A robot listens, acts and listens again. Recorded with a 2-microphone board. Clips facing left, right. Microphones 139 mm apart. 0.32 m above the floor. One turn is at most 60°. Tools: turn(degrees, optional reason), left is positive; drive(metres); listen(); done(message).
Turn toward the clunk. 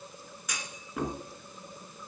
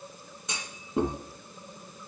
turn(degrees=-25, reason="The clunk: about 25° right or 155° right.")
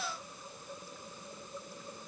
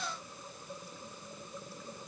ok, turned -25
listen()
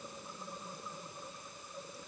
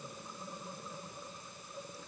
done("I heard a clunk, but can't make it out now. It was about straight ahead or 130° right.")